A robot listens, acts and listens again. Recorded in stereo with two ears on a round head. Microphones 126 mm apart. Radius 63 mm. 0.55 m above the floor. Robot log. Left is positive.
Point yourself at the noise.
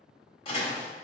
note: The door slam: about 40° left or 140° left.
cmd yaw +40
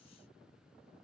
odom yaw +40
cmd idle
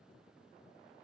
end: I heard a door slam, but can't make it out now. It was about straight ahead or 100° left.